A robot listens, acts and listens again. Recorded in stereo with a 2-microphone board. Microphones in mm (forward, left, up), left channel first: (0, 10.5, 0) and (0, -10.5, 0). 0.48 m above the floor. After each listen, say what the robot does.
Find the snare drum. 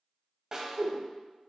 Turn 25° right.
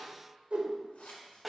Facing the snare drum.